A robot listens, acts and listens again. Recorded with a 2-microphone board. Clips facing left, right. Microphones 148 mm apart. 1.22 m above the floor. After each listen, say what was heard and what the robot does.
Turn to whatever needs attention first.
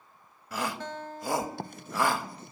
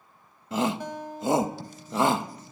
The shout: about 20° right or 160° right. Turn 20° right.
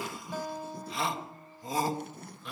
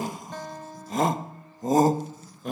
So it is at 135° right. Turn 135° right.
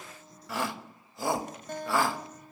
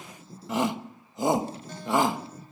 The shout is now 20° right. Turn 20° right.
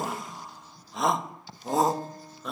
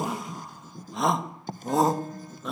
Found it: a shout, straight ahead, 1 to 2 m away.